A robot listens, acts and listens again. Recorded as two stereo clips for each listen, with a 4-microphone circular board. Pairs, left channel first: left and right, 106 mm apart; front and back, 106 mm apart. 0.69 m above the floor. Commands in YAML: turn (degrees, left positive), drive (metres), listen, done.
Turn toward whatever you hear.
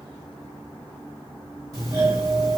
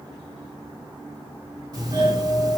turn: -135
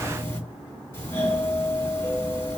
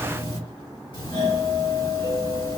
turn: 30
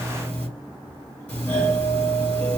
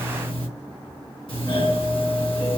turn: 15
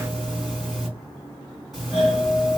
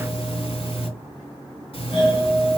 done: "Facing the doorbell."